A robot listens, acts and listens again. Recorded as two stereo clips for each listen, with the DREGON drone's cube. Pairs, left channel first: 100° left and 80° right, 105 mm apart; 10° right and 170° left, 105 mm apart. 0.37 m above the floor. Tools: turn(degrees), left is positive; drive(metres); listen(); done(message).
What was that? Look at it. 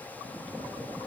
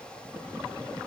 listen()
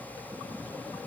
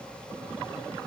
listen()
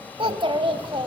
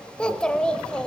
turn(degrees=-90)
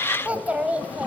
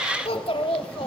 done("Facing the child speaking, 1 to 2 m away.")